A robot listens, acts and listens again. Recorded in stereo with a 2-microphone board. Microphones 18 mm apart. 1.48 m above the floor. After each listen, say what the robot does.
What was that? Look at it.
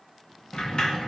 Turn 60° left.
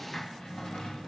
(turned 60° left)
Turn 60° left.
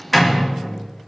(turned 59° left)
Facing the sliding door, 1 to 2 m away.